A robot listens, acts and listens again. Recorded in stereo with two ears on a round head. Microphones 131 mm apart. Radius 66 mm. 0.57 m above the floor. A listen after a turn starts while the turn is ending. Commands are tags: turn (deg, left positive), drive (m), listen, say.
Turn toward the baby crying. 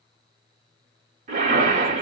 <listen/>
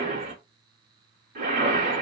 <listen/>
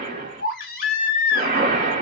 <turn deg="70"/>
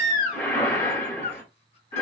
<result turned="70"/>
<turn deg="40"/>
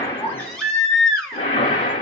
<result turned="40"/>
<say>Facing the baby crying.</say>